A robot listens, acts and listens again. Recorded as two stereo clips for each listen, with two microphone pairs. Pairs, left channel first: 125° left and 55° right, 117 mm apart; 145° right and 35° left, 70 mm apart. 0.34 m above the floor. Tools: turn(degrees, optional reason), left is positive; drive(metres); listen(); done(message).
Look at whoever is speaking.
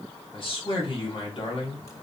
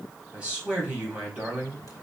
turn(degrees=105, reason="The man speaking: 105° left.")
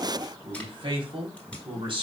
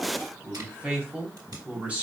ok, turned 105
turn(degrees=-30, reason="The man speaking is now 30° right.")
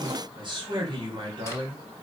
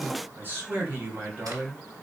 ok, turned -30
turn(degrees=-20, reason="The man speaking is now 20° right.")
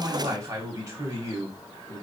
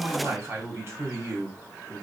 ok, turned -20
done("Found it: a man speaking, straight ahead, 2 to 4 m away.")